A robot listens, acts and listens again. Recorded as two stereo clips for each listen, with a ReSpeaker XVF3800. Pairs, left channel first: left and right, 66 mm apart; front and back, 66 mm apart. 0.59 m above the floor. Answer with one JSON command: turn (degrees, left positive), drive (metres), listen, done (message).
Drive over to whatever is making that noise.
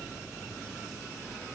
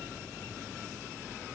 {"listen": true}
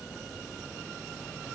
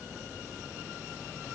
{"listen": true}
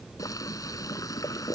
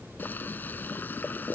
{"turn": 60}
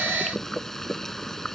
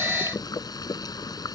{"drive": 1.0}
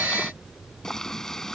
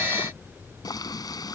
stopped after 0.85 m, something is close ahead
{"done": "Blocked. The boiling is further on, straight ahead."}